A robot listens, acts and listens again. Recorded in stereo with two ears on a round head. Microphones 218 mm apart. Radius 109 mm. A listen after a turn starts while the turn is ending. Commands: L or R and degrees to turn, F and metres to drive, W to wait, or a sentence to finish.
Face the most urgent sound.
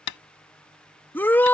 L30
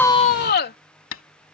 L140
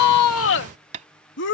L50
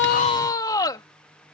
L15
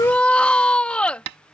Facing the shout.